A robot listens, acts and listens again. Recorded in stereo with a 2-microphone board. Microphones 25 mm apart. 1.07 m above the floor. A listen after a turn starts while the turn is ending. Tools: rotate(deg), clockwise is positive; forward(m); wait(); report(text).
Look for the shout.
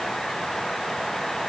wait()
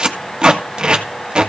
wait()
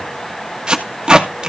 report("I can't make out a shout to turn to.")